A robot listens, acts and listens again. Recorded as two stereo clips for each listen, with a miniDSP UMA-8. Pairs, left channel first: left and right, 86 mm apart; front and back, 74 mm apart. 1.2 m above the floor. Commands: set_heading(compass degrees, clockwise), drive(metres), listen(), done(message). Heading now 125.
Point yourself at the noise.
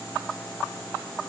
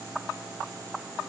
listen()
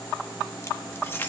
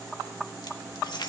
set_heading(105)
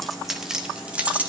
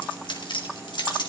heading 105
set_heading(125)
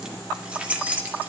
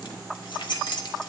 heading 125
set_heading(145)
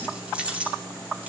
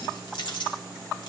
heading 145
set_heading(160)
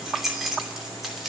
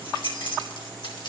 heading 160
done("Facing the keys jangling.")